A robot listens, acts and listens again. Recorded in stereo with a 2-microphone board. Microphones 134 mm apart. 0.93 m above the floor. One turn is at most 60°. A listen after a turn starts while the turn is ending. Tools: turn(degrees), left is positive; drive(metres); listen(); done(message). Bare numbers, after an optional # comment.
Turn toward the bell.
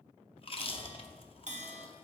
# The bell: about 60° right or 120° right.
turn(-60)
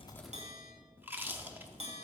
# So it is at 55° right.
turn(-55)
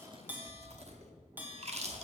# The bell is now 15° right.
turn(-15)
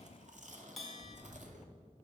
done("Facing the bell, 1 to 2 m away.")